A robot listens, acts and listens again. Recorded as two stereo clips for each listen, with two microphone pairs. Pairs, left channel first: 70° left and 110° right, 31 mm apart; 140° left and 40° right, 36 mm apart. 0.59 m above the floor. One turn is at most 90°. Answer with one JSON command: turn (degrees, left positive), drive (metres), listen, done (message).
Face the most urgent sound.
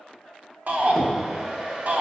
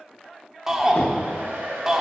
{"turn": -90}
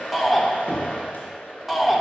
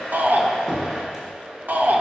{"turn": -25}
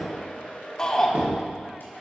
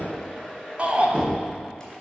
{"done": "Found it: a shout, straight ahead."}